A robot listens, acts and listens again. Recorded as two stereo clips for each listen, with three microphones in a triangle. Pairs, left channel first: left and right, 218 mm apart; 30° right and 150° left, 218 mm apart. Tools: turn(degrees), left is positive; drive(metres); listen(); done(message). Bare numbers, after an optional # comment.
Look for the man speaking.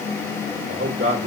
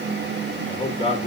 # The man speaking: 95° right.
turn(-95)
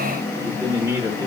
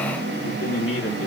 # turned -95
# The man speaking is now 10° right.
turn(-10)
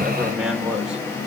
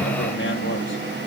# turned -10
listen()
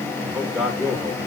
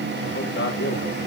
done("Facing the man speaking, 1 to 2 m away.")